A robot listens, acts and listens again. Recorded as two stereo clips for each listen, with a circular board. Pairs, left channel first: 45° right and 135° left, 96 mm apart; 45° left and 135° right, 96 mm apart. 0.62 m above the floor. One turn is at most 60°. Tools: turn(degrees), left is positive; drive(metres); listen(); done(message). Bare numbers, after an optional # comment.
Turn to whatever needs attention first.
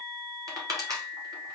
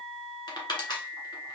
listen()
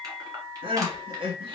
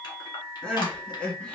# The crying: 125° left.
turn(60)
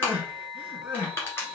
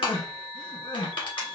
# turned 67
# The crying is now 60° left.
turn(60)
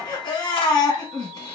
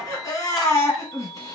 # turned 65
done("Found it: crying, straight ahead, 1 to 2 m away.")